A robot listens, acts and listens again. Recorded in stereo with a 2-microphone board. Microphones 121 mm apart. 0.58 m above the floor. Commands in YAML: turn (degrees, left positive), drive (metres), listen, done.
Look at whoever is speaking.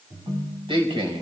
turn: -50
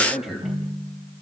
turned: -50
done: "Facing the man speaking, 2 to 4 m away."